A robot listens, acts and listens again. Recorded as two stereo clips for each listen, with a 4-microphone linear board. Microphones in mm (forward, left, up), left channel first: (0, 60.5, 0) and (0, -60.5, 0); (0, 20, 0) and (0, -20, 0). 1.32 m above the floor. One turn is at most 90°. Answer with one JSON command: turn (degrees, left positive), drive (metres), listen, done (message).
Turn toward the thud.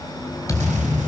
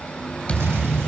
{"turn": 25}
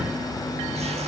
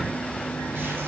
{"listen": true}
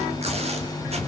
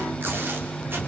{"done": "I heard a thud, but can't make it out now. It was about straight ahead or 130° left."}